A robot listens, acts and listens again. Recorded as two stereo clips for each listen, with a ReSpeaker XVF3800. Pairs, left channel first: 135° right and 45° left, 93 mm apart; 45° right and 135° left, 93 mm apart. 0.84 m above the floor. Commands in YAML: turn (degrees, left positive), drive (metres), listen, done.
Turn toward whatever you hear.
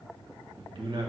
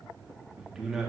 turn: 45
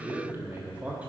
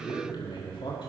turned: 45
turn: -30
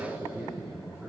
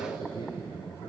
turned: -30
turn: -25
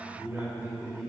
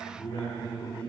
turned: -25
turn: -15
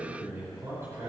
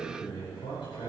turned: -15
turn: -10
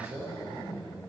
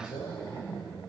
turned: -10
done: "Found it: a man speaking, straight ahead."